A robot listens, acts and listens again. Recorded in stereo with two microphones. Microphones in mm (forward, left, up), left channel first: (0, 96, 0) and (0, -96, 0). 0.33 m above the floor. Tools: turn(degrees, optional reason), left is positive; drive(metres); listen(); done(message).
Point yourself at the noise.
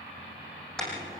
turn(degrees=30)
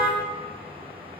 turn(degrees=-30, reason="So it is at 30° right.")
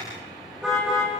done("Found it: a car horn, straight ahead.")